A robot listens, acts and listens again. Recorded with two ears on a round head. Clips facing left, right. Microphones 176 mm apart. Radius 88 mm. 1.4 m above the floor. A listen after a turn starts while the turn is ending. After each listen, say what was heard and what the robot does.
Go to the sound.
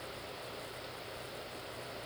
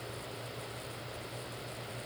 Keep listening.
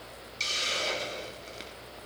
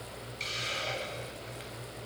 The hiss: about 55° left or 125° left. Turn 55° left.
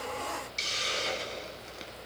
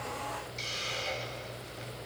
So it is at 70° left. Turn 70° left.
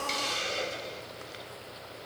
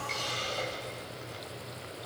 The hiss is now 30° left. Turn 30° left.
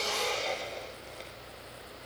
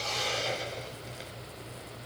Drive 1.0 m forward.
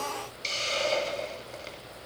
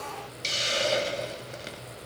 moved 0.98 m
The hiss is now 15° right. Turn 15° right.
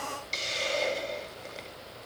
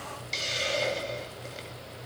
Drive 1.0 m forward.
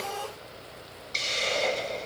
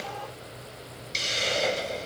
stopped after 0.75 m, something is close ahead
Arrived at the hiss, straight ahead.